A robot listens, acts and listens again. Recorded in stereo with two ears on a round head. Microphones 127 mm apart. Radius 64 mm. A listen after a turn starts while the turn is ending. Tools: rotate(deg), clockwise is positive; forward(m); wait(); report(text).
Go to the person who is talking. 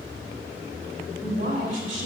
rotate(60)
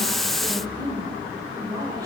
rotate(30)
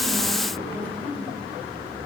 rotate(-10)
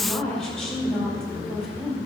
forward(1.0)
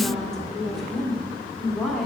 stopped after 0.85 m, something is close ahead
report("I am next to the woman speaking.")